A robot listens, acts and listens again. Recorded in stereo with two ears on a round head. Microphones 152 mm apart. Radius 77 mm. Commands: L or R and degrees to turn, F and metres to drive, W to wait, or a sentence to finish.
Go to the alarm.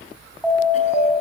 L30
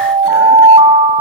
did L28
R30
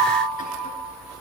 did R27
F1.0
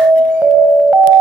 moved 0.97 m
R10
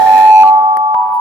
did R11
F1.0
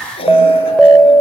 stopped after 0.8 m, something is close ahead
Arrived at the alarm, straight ahead.